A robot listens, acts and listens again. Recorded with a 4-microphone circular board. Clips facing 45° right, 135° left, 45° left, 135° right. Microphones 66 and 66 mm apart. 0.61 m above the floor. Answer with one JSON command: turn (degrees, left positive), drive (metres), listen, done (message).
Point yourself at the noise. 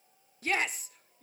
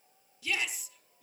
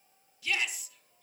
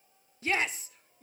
{"turn": -85}
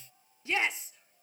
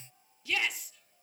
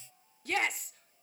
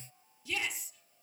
{"turn": 15}
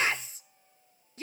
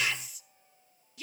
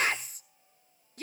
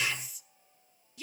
{"done": "Found it: a shout, straight ahead."}